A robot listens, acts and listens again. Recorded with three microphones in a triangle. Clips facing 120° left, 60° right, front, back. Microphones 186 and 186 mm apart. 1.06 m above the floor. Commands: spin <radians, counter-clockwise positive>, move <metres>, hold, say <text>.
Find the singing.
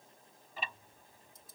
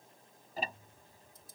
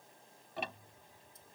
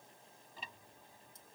hold
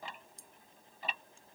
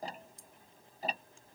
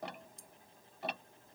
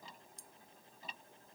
hold
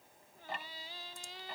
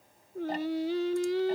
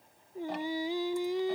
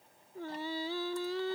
spin -1.22
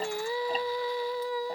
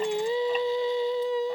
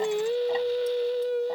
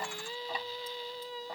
say Found it: singing, straight ahead.